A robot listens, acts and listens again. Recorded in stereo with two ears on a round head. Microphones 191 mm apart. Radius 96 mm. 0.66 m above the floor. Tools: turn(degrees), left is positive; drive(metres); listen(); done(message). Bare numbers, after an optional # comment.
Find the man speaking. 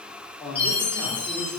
turn(30)
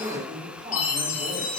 # So it is at 30° right.
turn(-30)
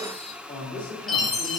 # The man speaking is now 10° left.
turn(10)
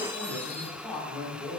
done("Facing the man speaking, 1 to 2 m away.")